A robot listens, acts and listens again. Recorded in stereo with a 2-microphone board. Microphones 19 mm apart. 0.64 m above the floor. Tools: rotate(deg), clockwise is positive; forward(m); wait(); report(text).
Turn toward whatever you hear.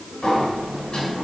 rotate(-50)
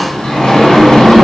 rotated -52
rotate(-75)
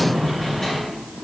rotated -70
report("Facing the sliding door, 1 to 2 m away.")